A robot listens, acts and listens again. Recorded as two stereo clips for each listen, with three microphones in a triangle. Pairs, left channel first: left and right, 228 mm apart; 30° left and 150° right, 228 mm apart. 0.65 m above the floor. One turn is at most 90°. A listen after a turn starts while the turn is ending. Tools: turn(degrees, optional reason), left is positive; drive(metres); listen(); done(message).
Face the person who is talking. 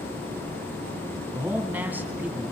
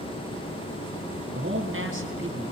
turn(degrees=-90, reason="The man speaking: 175° right.")
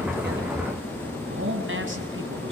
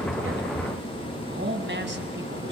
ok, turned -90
turn(degrees=-90, reason="The man speaking is now 115° right.")
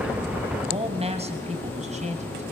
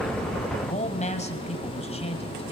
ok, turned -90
turn(degrees=-30, reason="The man speaking is now 30° right.")
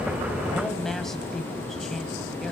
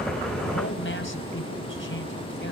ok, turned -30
done("Facing the man speaking, 2 to 4 m away.")